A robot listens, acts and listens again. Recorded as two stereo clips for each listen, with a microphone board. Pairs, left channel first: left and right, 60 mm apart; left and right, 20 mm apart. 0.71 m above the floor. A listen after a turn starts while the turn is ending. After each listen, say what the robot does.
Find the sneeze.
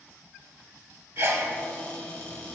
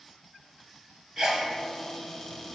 Turn 45° right.
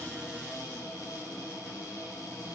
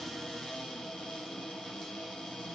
Keep listening.
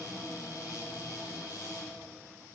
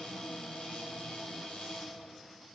I heard a sneeze, but can't make it out now. It was about straight ahead or 90° right.